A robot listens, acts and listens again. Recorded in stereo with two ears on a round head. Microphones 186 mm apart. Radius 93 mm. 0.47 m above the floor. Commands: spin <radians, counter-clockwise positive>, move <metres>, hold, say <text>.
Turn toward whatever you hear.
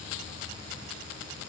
hold
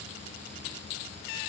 hold
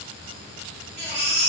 spin -0.96
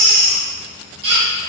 spin -0.96
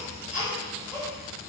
say Facing the baby crying.